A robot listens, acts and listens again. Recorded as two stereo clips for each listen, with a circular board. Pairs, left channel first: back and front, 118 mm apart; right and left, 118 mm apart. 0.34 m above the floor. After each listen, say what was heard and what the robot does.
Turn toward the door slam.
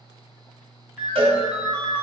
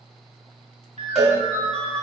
Keep listening.
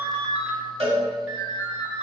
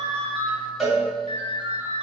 Keep listening.
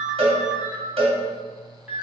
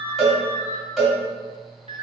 I can't make out a door slam to turn to.